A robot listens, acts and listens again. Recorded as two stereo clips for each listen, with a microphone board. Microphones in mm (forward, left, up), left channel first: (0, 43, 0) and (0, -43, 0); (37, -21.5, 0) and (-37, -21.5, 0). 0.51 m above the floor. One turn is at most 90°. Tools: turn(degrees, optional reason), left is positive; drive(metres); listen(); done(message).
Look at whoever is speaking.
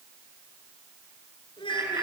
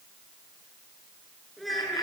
turn(degrees=90, reason="The child speaking: 90° left.")
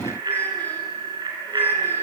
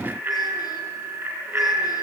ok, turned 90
listen()
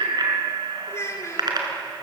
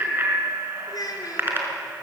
turn(degrees=35, reason="The child speaking is now 35° left.")
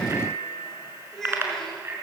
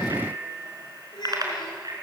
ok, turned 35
done("Facing the child speaking, over 4 m away.")